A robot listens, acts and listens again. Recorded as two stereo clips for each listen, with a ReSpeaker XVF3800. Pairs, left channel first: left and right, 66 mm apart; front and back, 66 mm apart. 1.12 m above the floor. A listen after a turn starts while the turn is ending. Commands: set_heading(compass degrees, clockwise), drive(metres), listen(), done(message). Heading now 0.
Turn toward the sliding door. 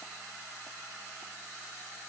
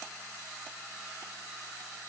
listen()
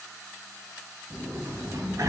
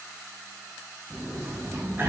set_heading(125)
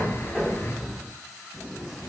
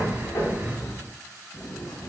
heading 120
done("Facing the sliding door.")